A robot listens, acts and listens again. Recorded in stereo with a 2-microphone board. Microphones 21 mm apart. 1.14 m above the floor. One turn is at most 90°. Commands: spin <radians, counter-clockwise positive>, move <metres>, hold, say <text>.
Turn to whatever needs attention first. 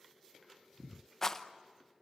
hold
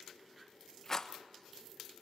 hold
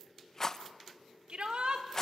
spin -1.05
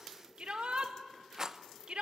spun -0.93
spin -1.05
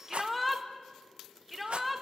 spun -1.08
say Facing the shout.